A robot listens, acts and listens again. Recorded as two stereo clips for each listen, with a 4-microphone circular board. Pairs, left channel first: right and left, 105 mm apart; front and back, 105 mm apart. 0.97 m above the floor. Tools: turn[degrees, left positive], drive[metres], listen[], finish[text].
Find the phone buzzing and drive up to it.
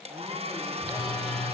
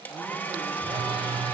Thought: The phone buzzing: 145° right.
Action: turn[-145]
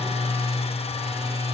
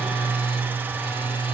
Thought: The phone buzzing is now 35° left.
Action: turn[35]
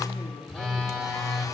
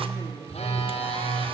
Action: drive[1.0]
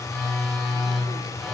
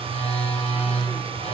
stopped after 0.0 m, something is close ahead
Action: finish[Something is in my way. I am facing the phone buzzing but have not reached it.]